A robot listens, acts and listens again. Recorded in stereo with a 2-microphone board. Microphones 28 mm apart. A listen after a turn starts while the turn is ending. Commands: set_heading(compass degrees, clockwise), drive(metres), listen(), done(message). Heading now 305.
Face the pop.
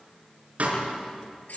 set_heading(5)
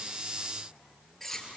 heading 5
listen()
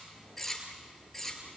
done("I heard a pop, but can't make it out now. It was about straight ahead or 60° right.")